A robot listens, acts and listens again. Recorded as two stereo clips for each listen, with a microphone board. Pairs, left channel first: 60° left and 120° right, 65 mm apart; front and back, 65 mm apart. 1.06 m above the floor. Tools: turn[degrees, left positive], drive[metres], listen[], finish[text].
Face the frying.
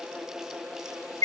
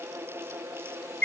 Action: listen[]
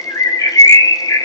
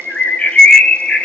Action: listen[]
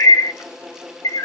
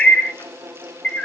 Action: finish[I can't make out frying, only a bird.]